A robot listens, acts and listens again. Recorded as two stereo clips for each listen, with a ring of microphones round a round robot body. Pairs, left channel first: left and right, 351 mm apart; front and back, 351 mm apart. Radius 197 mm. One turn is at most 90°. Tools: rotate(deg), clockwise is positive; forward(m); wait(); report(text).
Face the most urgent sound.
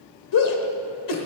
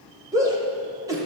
rotate(-90)
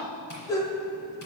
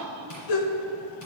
rotate(-10)
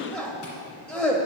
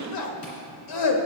report("Facing the shout, 1 to 2 m away.")